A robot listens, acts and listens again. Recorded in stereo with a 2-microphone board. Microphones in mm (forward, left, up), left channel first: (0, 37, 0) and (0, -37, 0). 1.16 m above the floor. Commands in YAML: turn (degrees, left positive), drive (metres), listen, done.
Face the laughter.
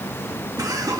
turn: -55
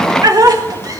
turn: -55
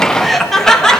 turn: 10
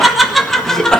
turn: 10
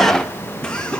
turn: 15
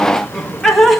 done: "Found it: laughter, straight ahead, 1 to 2 m away."